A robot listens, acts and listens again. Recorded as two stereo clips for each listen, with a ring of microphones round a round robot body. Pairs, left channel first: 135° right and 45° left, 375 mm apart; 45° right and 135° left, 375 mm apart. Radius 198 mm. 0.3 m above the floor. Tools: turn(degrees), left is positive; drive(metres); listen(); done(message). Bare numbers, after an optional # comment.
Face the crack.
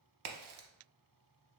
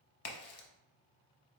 # The crack: 10° left.
turn(10)
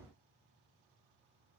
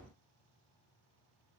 done("Facing where the crack came from. I can't hear it now.")